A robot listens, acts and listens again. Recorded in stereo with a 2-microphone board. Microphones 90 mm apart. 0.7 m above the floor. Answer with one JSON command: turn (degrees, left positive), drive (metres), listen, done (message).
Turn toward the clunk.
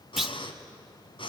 {"turn": -30}
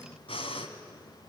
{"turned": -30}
{"listen": true}
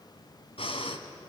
{"done": "I heard a clunk, but can't make it out now. It was about 25° left or 145° right."}